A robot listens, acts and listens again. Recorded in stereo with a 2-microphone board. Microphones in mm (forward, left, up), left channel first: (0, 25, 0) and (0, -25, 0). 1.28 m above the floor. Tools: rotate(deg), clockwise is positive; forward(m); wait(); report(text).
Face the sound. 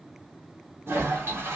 rotate(60)
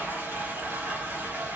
rotate(45)
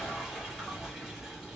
rotate(10)
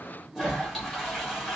report("Facing the toilet flushing, 1 to 2 m away.")